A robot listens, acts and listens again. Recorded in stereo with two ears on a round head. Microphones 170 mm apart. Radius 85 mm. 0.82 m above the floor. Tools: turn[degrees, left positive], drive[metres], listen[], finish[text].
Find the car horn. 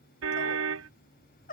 Action: turn[-90]
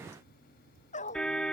Action: finish[Found it: a car horn, straight ahead.]